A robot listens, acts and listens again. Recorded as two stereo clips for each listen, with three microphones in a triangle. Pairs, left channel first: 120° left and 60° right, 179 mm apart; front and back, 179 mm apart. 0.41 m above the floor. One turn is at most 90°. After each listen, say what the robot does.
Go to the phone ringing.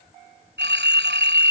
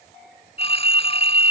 Turn 55° right.
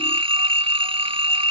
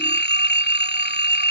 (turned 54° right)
Drive 1.0 m forward.
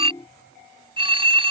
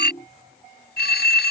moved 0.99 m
Drive 1.0 m forward.
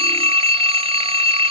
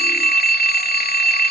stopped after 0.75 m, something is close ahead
Turn 10° right.
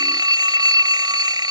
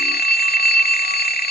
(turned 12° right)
I am next to the phone ringing.